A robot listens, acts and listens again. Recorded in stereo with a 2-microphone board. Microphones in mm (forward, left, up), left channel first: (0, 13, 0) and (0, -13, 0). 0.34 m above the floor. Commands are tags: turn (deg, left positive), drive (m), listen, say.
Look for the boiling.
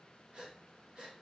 <listen/>
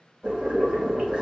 <turn deg="-45"/>
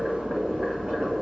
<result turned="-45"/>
<turn deg="-85"/>
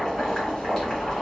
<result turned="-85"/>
<turn deg="25"/>
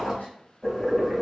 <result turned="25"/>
<say>Facing the boiling.</say>